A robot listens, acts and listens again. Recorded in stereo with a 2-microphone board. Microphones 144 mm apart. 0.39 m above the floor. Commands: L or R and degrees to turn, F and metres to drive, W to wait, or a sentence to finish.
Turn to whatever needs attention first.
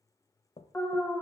L15
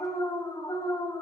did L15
L150
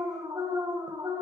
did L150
R25
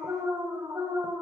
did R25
R20
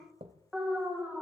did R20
Facing the alarm, 1 to 2 m away.